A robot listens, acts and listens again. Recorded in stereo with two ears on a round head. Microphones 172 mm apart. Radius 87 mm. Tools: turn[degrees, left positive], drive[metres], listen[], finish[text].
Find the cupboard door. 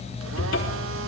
Thought: The cupboard door: about 70° left or 110° left.
Action: turn[70]
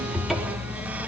Action: finish[Found it: a cupboard door, straight ahead.]